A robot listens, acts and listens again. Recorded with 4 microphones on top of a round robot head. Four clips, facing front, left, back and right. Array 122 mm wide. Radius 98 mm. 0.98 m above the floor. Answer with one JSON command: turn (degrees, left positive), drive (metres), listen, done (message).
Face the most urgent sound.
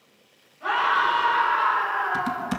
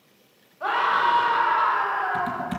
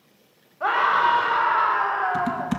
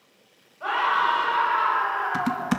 {"turn": 165}
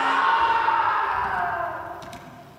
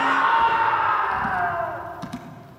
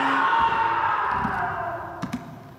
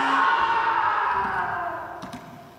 {"turn": 70}
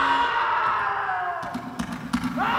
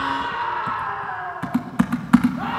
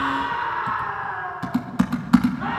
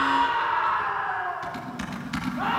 {"done": "Found it: a scream, straight ahead."}